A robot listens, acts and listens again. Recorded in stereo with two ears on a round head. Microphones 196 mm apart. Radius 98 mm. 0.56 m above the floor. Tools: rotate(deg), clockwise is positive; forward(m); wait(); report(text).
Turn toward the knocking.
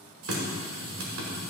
wait()
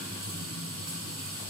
wait()
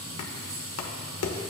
rotate(-70)
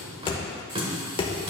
rotate(-25)
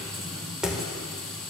report("Found it: knocking, straight ahead.")